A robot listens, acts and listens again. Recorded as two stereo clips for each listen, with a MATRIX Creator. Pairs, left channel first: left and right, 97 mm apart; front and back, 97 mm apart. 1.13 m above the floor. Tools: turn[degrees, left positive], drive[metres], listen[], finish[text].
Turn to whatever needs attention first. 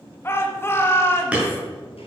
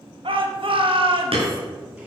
Thought: The shout: 155° left.
Action: turn[155]
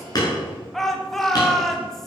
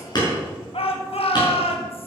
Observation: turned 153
Action: finish[Found it: a shout, straight ahead, 1 to 2 m away.]